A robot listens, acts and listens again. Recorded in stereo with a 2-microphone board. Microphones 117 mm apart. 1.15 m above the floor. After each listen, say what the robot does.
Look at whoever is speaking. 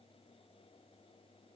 Keep listening.
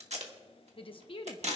Turn 50° left.
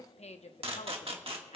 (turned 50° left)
Turn 75° left.
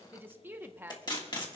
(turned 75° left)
Turn 20° right.
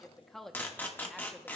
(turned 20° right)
Facing the woman speaking, under 1 m away.